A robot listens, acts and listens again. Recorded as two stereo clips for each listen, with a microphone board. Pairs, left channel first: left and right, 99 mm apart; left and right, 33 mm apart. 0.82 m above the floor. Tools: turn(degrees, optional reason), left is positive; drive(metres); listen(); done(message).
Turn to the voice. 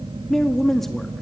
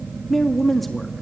turn(degrees=30)
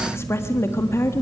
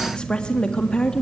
turn(degrees=150, reason="So it is at 150° left.")
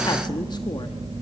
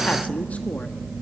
listen()
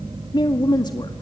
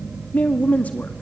turn(degrees=55, reason="The woman speaking is now 55° left.")
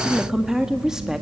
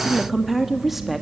done("Found it: a woman speaking, straight ahead.")